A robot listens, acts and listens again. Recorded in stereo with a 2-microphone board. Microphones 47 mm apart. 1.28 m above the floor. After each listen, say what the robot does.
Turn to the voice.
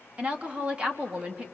Turn 25° right.
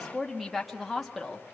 Facing the woman speaking, 2 to 4 m away.